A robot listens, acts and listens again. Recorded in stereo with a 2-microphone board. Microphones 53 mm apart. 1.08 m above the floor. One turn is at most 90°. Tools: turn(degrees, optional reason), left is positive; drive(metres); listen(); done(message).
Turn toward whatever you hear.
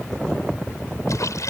turn(degrees=90)
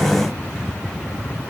done("Facing where the splash came from. I can't hear it now.")